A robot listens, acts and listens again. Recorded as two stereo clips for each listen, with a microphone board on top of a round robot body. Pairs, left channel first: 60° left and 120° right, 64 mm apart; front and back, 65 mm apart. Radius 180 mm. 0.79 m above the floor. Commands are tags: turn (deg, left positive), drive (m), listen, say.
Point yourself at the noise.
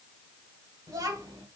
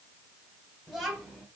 <turn deg="-95"/>
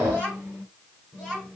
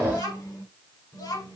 <turn deg="-20"/>
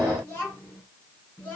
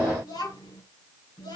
<say>Facing the child speaking, over 4 m away.</say>